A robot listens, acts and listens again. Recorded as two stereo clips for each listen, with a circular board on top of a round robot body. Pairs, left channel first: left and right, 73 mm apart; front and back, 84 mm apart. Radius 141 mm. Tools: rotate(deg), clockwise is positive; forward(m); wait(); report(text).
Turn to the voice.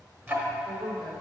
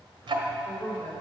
rotate(75)
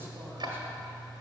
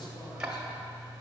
wait()
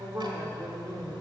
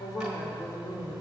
rotate(45)
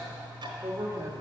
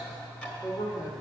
rotate(40)
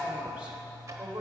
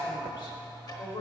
rotate(25)
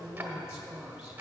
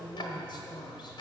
rotate(10)
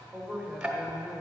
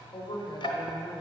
report("Facing the woman speaking, 1 to 2 m away.")